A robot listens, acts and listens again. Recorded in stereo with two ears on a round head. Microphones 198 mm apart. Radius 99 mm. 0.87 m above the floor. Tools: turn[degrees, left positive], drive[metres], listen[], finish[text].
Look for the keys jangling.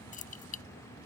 Thought: The keys jangling: about 40° left or 140° left.
Action: turn[40]
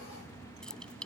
Action: finish[Found it: keys jangling, straight ahead.]